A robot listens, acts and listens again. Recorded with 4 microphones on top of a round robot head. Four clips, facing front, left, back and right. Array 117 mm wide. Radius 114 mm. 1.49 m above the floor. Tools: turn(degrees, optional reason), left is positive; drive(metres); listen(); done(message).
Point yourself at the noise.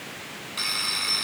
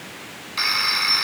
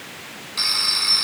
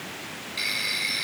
turn(degrees=105, reason="The phone ringing: 105° left.")
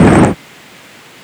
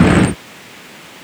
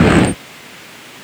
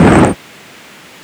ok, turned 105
listen()
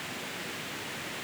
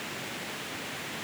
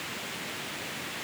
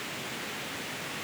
listen()
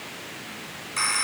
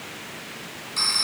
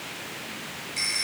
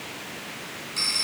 turn(degrees=25, reason="The phone ringing is now 25° left.")
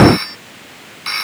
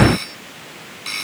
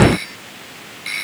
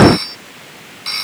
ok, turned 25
turn(degrees=-20, reason="The phone ringing is now 20° right.")
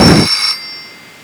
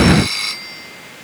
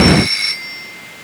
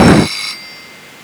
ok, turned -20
done("Facing the phone ringing.")